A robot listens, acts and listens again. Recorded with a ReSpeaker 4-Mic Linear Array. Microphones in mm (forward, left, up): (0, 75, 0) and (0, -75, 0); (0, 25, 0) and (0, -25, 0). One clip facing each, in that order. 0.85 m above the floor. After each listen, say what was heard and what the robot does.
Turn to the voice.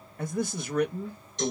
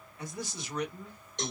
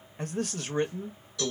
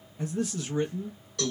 The man speaking: about 50° left or 130° left. Turn 50° left.
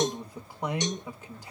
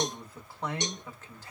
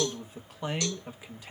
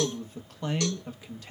So it is at 15° left. Turn 15° left.
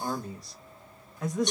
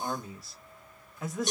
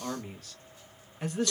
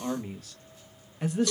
Facing the man speaking, under 1 m away.